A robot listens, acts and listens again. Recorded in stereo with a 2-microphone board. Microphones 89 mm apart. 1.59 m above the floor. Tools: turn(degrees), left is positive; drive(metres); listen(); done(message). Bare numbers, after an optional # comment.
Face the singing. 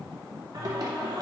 # The singing: about 50° right or 130° right.
turn(-50)
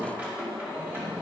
# So it is at 25° right.
turn(-25)
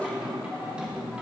# The singing is now 15° right.
turn(-15)
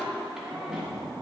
# The singing is now 10° right.
turn(-10)
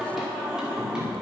# The singing is now 10° right.
turn(-10)
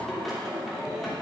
done("Found it: singing, straight ahead.")